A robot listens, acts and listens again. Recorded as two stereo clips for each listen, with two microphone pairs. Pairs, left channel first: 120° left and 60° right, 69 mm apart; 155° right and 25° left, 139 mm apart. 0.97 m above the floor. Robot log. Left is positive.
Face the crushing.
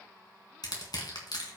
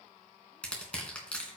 note: The crushing: 125° left.
cmd yaw +125
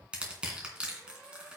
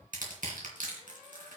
note: The crushing is now 15° left.
cmd yaw +15
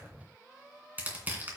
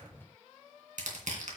end: Found it: crushing, straight ahead, 2 to 4 m away.